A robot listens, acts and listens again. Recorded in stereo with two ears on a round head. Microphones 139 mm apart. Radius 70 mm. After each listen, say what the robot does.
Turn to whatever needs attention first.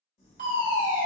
Turn 55° right.
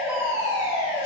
Turn 15° right.
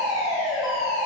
Found it: a fire alarm, straight ahead.